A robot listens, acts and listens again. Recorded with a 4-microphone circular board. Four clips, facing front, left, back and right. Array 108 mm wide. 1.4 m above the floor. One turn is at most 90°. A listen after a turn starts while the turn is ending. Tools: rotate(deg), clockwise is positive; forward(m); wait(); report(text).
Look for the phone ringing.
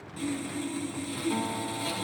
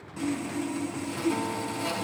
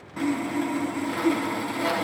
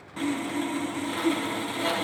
wait()
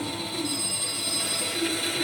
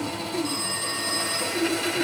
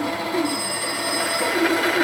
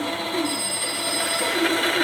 rotate(-90)
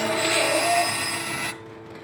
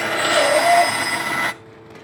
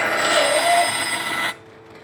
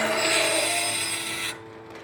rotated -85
rotate(-55)
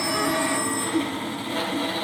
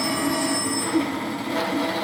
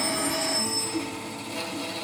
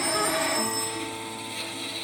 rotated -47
report("Found it: a phone ringing, straight ahead.")